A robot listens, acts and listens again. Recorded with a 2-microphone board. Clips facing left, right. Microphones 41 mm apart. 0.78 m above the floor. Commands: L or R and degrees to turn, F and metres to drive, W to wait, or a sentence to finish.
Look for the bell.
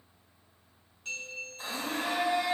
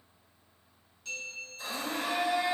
L45
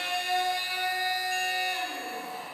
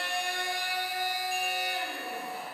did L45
W
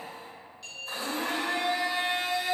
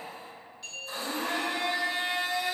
Found it: a bell, straight ahead, 1 to 2 m away.